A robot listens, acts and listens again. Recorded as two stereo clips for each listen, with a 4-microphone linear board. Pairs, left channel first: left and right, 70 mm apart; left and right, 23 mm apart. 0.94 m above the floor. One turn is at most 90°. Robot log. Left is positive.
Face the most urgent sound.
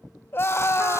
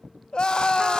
note: The scream: about 30° left or 150° left.
cmd yaw +30
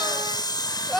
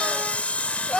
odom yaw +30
end: Facing the scream, 1 to 2 m away.